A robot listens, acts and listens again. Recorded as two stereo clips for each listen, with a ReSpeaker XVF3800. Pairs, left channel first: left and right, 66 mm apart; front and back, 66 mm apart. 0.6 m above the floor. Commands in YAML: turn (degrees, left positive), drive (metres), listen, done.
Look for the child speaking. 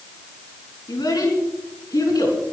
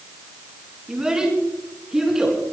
turn: 95
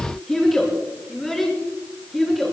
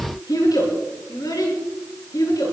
done: "Found it: a child speaking, straight ahead."